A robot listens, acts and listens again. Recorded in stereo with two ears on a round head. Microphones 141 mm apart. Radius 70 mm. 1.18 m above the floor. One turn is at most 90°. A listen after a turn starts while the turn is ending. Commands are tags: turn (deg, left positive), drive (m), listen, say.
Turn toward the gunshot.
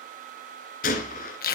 <turn deg="60"/>
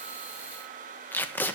<listen/>
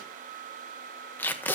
<say>I heard a gunshot, but can't make it out now. It was about straight ahead or 60° left.</say>